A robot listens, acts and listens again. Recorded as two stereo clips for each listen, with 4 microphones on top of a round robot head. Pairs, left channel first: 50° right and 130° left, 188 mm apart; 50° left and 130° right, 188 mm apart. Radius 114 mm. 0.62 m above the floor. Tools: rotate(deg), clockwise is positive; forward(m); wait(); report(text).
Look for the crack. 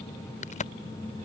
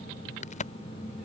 report("Facing the crack.")